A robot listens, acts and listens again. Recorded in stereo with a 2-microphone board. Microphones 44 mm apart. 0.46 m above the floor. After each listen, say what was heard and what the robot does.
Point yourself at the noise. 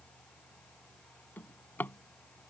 The drawer: about 45° left or 135° left. Turn 45° left.
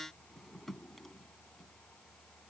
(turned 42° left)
Facing the drawer.